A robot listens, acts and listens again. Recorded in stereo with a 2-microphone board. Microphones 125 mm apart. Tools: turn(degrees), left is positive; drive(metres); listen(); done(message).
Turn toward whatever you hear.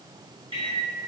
turn(degrees=-45)
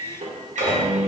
turn(degrees=-90)
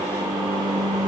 turn(degrees=-30)
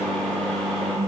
done("Facing the microwave, under 1 m away.")